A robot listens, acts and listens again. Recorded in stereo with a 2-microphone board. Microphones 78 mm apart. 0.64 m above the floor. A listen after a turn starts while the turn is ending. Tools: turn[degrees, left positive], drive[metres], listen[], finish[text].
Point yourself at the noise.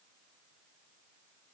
Action: listen[]
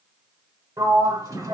Thought: The sliding door: about 50° right or 130° right.
Action: turn[-50]
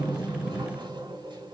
Action: listen[]
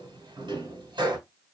Thought: So it is at 80° right.
Action: turn[-80]
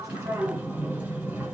Thought: The sliding door is now 20° right.
Action: turn[-20]
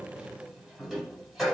Action: finish[Found it: a sliding door, straight ahead, 1 to 2 m away.]